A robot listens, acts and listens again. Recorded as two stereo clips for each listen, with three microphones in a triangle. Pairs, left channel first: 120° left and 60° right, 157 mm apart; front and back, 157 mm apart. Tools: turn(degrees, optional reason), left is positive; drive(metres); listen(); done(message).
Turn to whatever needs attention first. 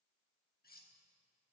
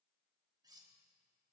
listen()
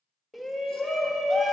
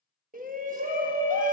turn(degrees=-150, reason="The shout: 150° right.")
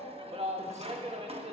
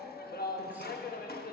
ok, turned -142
done("Found it: a shout, straight ahead.")